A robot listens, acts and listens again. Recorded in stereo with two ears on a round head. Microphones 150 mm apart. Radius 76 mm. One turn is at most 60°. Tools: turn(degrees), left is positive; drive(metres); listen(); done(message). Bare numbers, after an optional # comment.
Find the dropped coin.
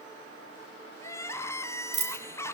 # The dropped coin: about 40° right or 140° right.
turn(-40)
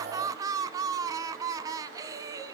listen()
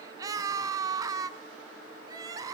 done("I heard a dropped coin, but can't make it out now. It was about straight ahead or 100° right.")